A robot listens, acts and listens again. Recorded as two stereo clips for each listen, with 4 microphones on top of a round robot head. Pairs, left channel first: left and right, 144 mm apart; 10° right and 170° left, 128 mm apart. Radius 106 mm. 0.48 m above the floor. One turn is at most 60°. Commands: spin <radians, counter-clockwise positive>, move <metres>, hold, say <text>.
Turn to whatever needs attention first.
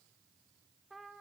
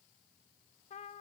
hold
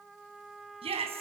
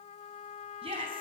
spin -1.05
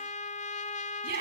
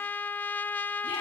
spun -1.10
spin -1.05
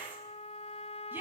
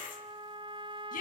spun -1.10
spin -0.17
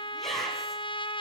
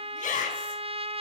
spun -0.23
say Facing the shout.